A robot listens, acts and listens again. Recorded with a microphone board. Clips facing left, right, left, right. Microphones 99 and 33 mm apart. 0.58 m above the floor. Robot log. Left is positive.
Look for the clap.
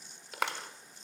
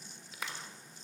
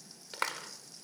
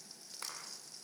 note: The clap: about 65° left or 115° left.
cmd yaw +65
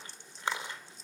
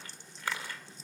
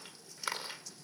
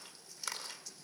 note: So it is at 25° left.
cmd yaw +25
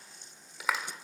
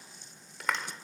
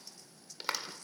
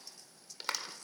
end: Facing the clap, 1 to 2 m away.